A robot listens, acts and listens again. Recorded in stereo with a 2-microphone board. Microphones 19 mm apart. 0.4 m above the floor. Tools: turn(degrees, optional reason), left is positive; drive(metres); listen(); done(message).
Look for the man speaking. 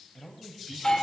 turn(degrees=40, reason="The man speaking: about 40° left or 140° left.")
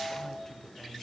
turn(degrees=15, reason="So it is at 15° left.")
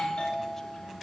listen()
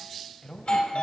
turn(degrees=25, reason="The man speaking is now 25° left.")
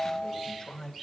turn(degrees=30, reason="The man speaking is now 30° left.")
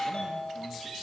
listen()
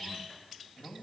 turn(degrees=20, reason="The man speaking is now 20° left.")
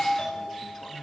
done("Found it: a man speaking, straight ahead, 2 to 4 m away.")